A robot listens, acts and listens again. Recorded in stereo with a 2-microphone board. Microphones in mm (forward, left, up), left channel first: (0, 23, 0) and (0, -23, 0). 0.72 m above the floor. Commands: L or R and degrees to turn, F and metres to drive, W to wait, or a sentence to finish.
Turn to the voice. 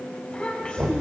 L25
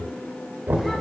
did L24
W
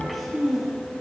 Facing the child speaking.